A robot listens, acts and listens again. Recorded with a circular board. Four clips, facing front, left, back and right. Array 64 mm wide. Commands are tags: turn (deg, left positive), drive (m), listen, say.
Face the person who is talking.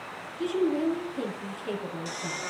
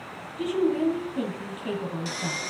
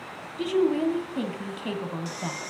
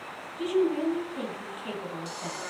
<turn deg="175"/>
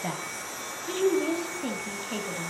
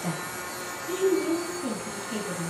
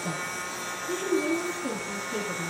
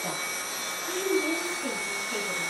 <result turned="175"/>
<say>Found it: a woman speaking, straight ahead.</say>